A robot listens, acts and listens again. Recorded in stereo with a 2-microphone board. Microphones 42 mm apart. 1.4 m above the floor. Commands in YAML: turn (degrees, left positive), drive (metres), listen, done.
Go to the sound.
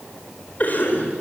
turn: 45
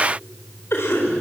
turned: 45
turn: 95
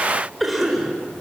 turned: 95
drive: 1.0
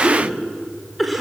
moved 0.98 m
drive: 1.0
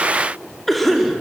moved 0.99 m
drive: 1.0
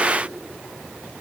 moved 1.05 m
listen: true
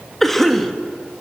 turn: 10
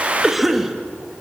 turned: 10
drive: 1.0
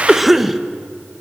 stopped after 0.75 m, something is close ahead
done: "Arrived at the cough, straight ahead."